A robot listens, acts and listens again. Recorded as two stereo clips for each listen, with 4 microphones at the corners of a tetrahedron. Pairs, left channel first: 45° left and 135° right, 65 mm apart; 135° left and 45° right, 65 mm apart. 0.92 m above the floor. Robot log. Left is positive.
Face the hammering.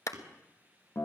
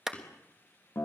note: The hammering: 160° right.
cmd yaw -160
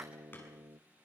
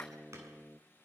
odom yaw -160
cmd idle
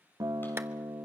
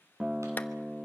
cmd idle
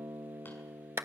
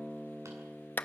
end: I heard hammering from this way, but can't make it out now.